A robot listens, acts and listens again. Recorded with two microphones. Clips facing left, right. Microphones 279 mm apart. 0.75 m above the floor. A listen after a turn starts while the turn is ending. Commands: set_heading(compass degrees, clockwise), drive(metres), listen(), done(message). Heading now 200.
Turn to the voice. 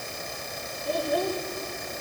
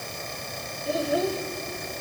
set_heading(230)
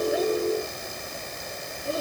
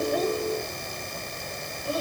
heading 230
set_heading(205)
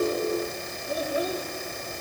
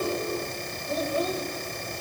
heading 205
set_heading(195)
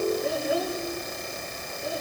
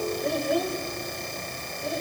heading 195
done("Facing the child speaking, 2 to 4 m away.")